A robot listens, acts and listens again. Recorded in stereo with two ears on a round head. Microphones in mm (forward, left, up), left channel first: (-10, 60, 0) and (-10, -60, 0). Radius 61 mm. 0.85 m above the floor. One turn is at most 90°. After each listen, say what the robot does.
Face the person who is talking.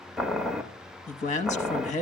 Turn 60° left.
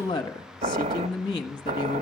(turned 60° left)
Turn 40° left.
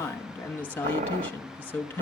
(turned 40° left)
Turn 15° left.
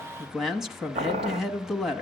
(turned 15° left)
Facing the man speaking, 1 to 2 m away.